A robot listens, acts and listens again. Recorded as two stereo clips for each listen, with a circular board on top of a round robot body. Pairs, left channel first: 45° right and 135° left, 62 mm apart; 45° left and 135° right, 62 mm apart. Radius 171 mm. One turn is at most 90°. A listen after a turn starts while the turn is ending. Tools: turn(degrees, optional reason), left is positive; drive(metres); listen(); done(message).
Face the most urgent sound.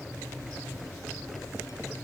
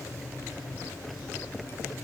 listen()
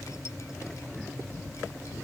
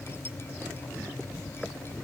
listen()
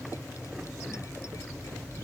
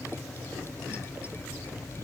done("I can't make out anything urgent.")